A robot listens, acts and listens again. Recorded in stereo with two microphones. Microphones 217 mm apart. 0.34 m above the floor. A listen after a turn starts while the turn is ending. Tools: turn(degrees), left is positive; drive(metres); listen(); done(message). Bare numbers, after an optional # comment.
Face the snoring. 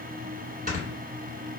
# The snoring: about 40° right or 140° right.
turn(-40)
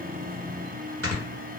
# So it is at 100° right.
turn(-100)
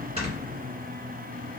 listen()
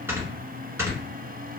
# The snoring is now 10° right.
turn(-10)
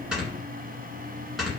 done("Facing the snoring.")